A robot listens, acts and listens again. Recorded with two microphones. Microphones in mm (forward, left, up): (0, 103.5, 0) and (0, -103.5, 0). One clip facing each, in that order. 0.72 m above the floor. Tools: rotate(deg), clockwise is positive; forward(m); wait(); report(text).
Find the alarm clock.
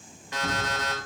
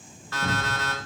rotate(-20)
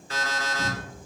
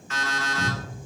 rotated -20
rotate(-140)
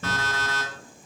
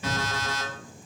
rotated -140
rotate(15)
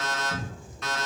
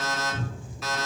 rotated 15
report("Found it: an alarm clock, straight ahead.")